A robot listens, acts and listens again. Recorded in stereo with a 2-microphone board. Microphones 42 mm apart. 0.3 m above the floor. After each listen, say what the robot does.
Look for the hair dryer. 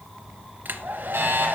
Turn 55° right.
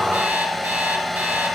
Found it: a hair dryer, straight ahead.